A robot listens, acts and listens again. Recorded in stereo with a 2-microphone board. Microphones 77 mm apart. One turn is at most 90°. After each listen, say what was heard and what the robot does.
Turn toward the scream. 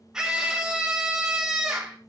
Turn 30° right.
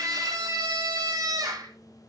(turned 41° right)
So it is at 130° right. Turn 90° right.
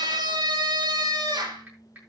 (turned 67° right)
The scream is now 60° right. Turn 60° right.
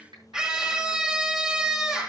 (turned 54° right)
Found it: a scream, straight ahead.